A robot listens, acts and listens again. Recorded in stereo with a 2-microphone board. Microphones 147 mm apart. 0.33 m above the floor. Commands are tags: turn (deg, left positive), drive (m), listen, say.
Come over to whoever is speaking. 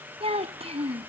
<turn deg="-40"/>
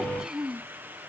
<drive m="1.0"/>
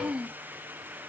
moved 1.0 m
<turn deg="-10"/>
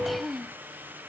<drive m="1.0"/>
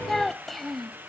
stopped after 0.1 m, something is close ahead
<say>Arrived at the child speaking, straight ahead.</say>